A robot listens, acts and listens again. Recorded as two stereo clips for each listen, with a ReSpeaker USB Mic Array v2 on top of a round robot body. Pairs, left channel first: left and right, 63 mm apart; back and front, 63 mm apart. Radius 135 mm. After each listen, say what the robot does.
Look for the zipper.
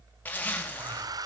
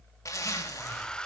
Turn 155° left.
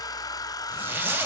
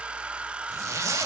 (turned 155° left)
Turn 30° right.
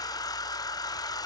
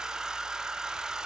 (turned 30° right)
Keep listening.
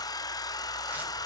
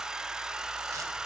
Keep listening.
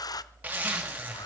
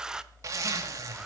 Turn 25° right.
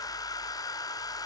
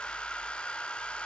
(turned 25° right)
Keep listening.
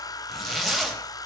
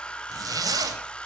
Facing the zipper, 2 to 4 m away.